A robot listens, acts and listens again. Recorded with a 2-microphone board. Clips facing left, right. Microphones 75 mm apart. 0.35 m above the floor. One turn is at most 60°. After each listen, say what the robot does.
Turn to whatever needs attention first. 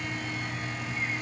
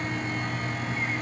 Keep listening.
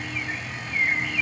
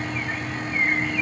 Keep listening.
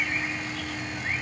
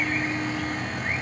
I can't make out anything urgent to turn to.